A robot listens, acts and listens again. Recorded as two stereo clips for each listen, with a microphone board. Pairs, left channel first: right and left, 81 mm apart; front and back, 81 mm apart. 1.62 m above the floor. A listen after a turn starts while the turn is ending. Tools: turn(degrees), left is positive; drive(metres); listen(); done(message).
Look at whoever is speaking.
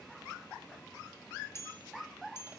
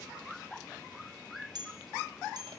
listen()
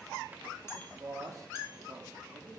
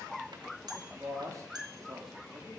turn(degrees=140)
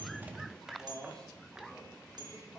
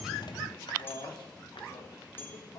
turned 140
turn(degrees=-10)
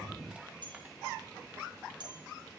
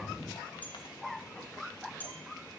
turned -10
listen()
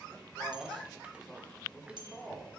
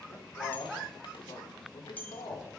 done("Facing the man speaking.")